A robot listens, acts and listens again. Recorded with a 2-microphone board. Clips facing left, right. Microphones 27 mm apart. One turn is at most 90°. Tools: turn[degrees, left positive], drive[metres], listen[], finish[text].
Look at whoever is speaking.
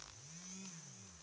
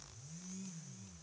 Action: listen[]
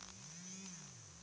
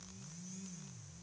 Action: listen[]
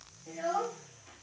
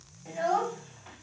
Thought: The child speaking: about 60° right or 120° right.
Action: turn[-60]
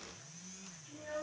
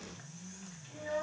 Thought: So it is at 45° right.
Action: turn[-45]
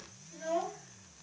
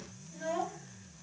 Thought: The child speaking is now 15° right.
Action: turn[-15]
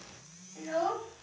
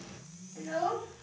Action: finish[Facing the child speaking.]